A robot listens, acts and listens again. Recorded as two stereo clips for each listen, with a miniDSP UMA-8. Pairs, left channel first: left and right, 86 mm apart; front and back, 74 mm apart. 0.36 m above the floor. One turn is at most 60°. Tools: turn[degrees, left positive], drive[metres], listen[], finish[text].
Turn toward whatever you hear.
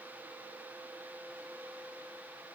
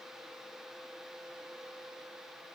Action: listen[]
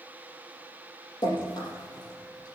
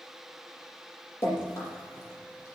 Thought: The dripping: 55° left.
Action: turn[55]
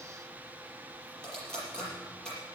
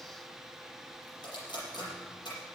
Thought: The dripping is now 10° left.
Action: turn[10]
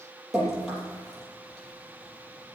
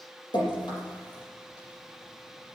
Action: finish[Found it: dripping, straight ahead.]